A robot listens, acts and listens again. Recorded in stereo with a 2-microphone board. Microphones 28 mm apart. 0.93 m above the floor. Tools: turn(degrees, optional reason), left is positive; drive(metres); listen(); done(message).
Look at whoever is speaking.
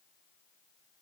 listen()
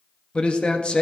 turn(degrees=40, reason="The man speaking: about 40° left or 140° left.")
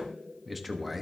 done("Facing the man speaking, 1 to 2 m away.")